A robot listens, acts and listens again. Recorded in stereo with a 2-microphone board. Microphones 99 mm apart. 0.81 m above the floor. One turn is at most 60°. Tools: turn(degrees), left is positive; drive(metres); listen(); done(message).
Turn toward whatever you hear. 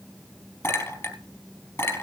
turn(degrees=30)
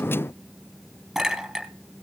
done("Facing the clink, 2 to 4 m away.")